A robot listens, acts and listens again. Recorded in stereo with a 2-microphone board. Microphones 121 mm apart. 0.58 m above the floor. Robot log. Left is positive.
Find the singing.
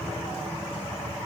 cmd idle
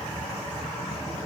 cmd idle
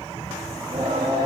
note: The singing: about 35° right or 145° right.
cmd yaw -35
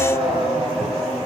end: Facing the singing, over 4 m away.